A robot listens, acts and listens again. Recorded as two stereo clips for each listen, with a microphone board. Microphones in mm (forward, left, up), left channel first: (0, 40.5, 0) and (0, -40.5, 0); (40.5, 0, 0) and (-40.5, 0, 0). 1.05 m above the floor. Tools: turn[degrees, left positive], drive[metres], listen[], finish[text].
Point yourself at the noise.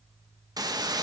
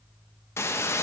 Thought: The hiss: 55° right.
Action: turn[-55]
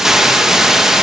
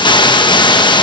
Action: finish[Facing the hiss.]